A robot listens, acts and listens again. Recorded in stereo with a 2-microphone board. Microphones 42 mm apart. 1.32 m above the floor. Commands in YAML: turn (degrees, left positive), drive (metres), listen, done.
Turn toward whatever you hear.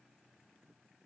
listen: true
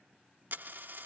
turn: -55
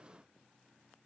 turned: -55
listen: true
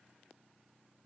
done: "I heard a dropped coin, but can't make it out now. It was about straight ahead or 70° right."